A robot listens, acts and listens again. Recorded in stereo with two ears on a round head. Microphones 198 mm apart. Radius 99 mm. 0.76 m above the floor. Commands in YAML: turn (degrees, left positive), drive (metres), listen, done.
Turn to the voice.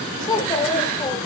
turn: 20
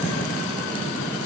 listen: true
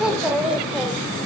done: "Facing the child speaking, 2 to 4 m away."